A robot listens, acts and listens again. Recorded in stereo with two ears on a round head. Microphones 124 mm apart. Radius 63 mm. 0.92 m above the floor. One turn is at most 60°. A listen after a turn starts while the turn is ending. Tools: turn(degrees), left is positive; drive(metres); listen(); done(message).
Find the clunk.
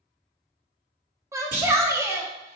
turn(degrees=-60)
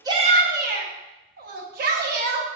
listen()
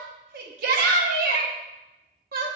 done("I heard a clunk, but can't make it out now. It was about straight ahead or 60° right.")